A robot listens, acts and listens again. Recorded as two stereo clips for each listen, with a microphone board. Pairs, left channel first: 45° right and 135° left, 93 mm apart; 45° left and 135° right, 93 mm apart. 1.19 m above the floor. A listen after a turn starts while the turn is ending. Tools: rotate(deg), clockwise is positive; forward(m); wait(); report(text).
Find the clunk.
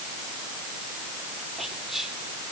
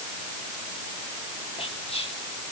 wait()
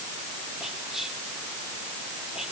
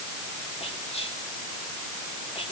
wait()
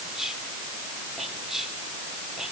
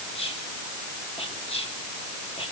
report("I can't make out a clunk to turn to.")